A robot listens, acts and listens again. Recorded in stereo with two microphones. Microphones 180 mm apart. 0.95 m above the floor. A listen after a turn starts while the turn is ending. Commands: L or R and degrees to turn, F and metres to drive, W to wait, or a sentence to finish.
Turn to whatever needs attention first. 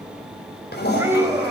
R30
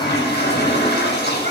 W
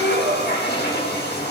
R135
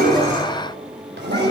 W
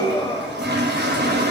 L25
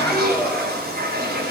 Facing the scream, over 4 m away.